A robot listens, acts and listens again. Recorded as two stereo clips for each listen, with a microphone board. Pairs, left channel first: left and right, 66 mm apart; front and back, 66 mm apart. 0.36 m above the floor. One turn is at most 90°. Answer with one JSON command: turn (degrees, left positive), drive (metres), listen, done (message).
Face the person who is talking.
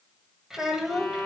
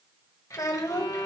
{"done": "Facing the child speaking, under 1 m away."}